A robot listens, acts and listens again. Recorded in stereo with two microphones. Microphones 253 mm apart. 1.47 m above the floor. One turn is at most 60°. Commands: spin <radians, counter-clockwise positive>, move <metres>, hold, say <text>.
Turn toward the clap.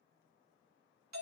hold
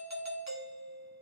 hold
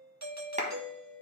spin -0.44
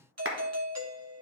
spin -1.05
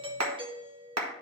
spin -1.05
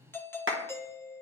spin -0.87
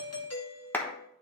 spin 0.17
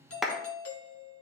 say Facing the clap, 1 to 2 m away.